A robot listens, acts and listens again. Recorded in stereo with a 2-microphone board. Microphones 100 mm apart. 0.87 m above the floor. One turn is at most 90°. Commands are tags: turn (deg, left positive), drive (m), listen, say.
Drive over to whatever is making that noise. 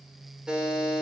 <turn deg="-30"/>
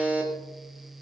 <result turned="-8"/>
<turn deg="-15"/>
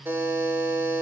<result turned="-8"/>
<turn deg="-90"/>
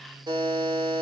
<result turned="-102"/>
<turn deg="-55"/>
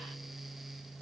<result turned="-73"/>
<turn deg="20"/>
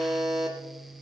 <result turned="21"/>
<drive m="1.0"/>
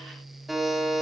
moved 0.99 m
<drive m="1.0"/>
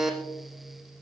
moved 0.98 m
<drive m="1.0"/>
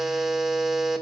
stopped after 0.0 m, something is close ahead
<say>Arrived at the buzzer, straight ahead.</say>